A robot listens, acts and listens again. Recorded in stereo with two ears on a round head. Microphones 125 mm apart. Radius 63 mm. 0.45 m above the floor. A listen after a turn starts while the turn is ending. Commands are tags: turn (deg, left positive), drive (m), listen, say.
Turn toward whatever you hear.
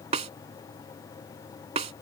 <turn deg="-45"/>
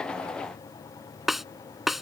<say>Found it: a snare drum, straight ahead.</say>